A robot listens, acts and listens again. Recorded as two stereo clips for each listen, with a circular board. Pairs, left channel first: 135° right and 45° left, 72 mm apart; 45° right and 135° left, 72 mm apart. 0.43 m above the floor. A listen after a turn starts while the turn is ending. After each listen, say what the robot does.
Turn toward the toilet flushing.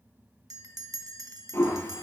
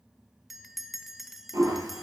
Turn 170° left.
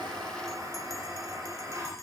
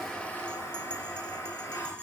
Facing the toilet flushing.